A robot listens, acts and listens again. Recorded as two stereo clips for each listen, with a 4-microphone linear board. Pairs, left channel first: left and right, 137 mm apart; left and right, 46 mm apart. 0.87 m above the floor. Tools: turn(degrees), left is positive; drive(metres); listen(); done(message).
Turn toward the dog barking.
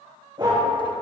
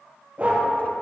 turn(degrees=-35)
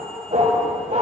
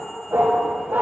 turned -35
turn(degrees=-115)
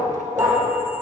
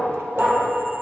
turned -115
turn(degrees=-30)
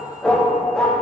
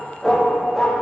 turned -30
done("Facing the dog barking.")